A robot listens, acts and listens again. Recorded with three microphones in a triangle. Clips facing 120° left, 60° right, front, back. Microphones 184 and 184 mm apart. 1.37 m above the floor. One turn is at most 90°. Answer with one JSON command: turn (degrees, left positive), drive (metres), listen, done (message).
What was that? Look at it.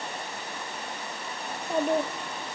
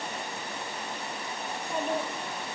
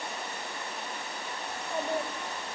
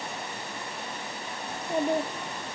{"turn": 90}
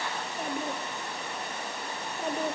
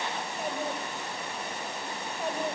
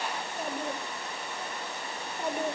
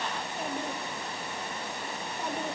{"turn": 80}
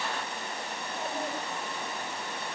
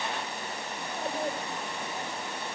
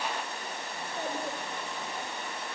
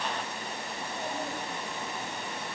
{"done": "Facing the child speaking, 2 to 4 m away."}